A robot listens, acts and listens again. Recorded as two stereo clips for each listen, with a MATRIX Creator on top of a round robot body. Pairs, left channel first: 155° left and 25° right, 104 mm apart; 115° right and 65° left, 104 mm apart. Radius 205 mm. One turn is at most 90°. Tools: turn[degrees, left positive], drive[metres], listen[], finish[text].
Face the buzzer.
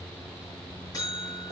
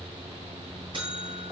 Thought: The buzzer: 105° left.
Action: turn[90]
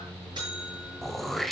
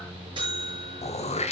Thought: The buzzer is now 25° left.
Action: turn[25]
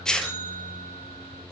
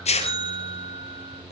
Thought: The buzzer is now 20° left.
Action: turn[20]
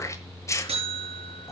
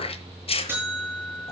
Action: finish[Found it: a buzzer, straight ahead, over 4 m away.]